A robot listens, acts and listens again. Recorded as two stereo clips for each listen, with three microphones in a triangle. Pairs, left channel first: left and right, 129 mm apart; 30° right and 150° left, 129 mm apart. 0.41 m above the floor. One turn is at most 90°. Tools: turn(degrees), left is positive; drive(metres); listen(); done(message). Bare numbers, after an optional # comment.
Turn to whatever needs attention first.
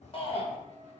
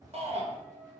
# The shout: 125° left.
turn(90)
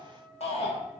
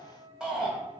# The shout is now 65° left.
turn(65)
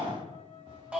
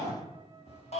# The shout is now 10° right.
turn(-10)
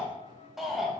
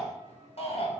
done("Found it: a shout, straight ahead, 2 to 4 m away.")